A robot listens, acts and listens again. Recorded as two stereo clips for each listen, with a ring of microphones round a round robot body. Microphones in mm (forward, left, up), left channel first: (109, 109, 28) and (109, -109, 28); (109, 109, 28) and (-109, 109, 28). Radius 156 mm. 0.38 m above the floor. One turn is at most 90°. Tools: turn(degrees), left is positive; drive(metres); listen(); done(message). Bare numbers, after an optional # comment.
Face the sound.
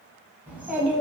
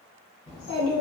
done("Facing the child speaking, 1 to 2 m away.")